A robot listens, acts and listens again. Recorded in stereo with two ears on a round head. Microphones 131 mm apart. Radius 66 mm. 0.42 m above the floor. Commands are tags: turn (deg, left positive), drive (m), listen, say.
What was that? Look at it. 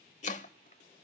<turn deg="55"/>
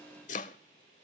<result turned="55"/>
<turn deg="65"/>
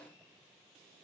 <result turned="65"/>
<listen/>
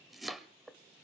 <say>Found it: chopping, straight ahead.</say>